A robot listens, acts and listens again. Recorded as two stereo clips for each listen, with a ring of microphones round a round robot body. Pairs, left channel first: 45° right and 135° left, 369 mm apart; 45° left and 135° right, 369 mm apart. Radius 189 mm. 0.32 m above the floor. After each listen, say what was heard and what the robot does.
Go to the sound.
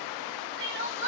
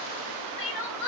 The crying: 75° left. Turn 75° left.
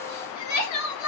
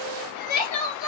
Drive 1.0 m forward.
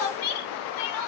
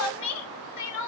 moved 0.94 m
Drive 1.0 m forward.
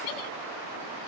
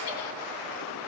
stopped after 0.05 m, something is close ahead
Keep listening.
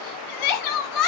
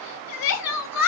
I am next to the crying.